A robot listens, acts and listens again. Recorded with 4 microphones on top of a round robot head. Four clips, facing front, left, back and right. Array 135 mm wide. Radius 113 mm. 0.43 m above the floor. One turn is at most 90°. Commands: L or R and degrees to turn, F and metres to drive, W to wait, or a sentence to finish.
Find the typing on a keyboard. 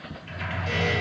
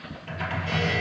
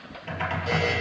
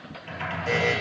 L90
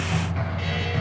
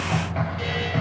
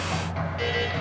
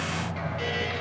L90
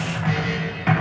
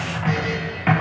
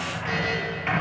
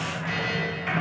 L65
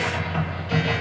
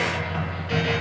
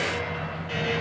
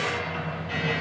L10
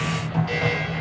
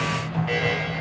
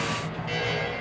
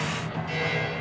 Facing the typing on a keyboard, over 4 m away.